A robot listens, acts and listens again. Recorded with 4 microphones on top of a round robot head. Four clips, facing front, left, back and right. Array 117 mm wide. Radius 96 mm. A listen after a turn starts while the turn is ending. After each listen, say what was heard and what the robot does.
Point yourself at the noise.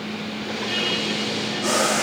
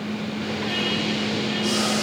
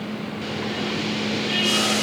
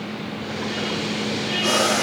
The boiling: 50° right. Turn 50° right.
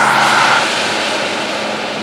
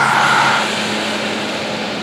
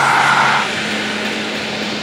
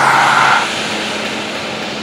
The boiling is now 10° left. Turn 10° left.
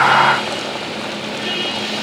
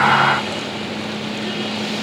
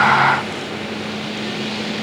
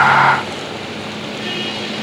Keep listening.
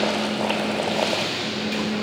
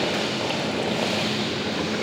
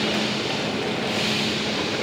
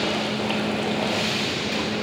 Keep listening.
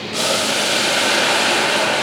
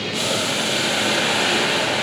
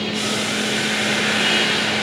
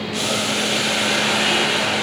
Found it: boiling, straight ahead.